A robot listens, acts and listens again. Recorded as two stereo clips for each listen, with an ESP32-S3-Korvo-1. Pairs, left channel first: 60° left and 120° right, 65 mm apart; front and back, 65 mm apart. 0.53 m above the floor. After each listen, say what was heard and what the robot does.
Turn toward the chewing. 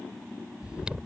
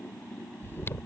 The chewing: 50° right. Turn 50° right.
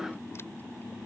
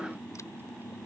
Keep listening.
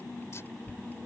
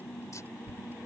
The chewing is now 25° left. Turn 25° left.
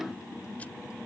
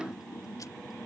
Keep listening.
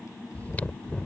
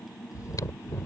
Found it: chewing, straight ahead.